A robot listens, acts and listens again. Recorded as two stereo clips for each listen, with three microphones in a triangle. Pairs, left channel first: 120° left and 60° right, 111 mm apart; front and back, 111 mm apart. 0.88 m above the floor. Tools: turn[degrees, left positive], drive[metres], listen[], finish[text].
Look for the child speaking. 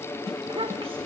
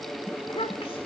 Thought: The child speaking: 35° right.
Action: turn[-35]
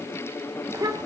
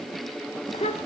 Action: finish[Facing the child speaking, 1 to 2 m away.]